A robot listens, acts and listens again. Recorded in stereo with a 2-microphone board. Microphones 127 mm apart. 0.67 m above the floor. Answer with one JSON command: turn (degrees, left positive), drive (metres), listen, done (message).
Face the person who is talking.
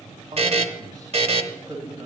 {"turn": -30}
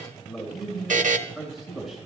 {"done": "Facing the man speaking."}